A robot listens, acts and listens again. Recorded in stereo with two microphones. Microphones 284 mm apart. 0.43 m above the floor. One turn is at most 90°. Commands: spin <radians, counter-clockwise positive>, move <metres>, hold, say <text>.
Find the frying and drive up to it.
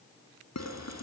spin -1.22
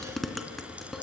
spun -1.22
move 1.0
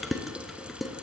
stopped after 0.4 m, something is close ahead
say Blocked. The frying is further on, straight ahead.